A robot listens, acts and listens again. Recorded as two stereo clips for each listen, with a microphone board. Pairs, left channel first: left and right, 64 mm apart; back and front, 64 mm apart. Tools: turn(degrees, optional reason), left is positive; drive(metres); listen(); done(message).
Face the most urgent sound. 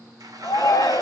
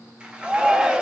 turn(degrees=75, reason="The shout: 75° left.")
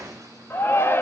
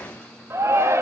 turn(degrees=40, reason="The shout is now 40° left.")
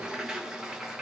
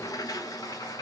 listen()
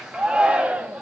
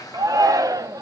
turn(degrees=-15, reason="The shout is now 15° right.")
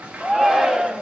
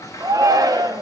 done("Facing the shout, under 1 m away.")